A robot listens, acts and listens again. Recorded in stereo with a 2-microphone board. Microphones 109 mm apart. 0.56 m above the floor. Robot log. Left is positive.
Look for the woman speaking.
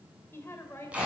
note: The woman speaking: about 25° left or 155° left.
cmd yaw +25
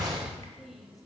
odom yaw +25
end: Found it: a woman speaking, straight ahead, 2 to 4 m away.